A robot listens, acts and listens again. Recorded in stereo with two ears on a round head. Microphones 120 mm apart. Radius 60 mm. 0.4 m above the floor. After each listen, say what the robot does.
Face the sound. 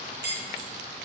Turn 90° right.
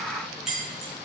Found it: keys jangling, straight ahead.